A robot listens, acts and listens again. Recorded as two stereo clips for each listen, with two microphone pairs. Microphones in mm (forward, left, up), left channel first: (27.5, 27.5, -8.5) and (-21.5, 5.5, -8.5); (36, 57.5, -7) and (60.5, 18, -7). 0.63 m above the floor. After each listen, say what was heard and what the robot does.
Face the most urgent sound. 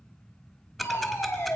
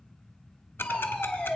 The fire alarm: 55° left. Turn 55° left.
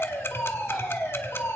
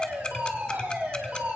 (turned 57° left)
Facing the fire alarm, over 4 m away.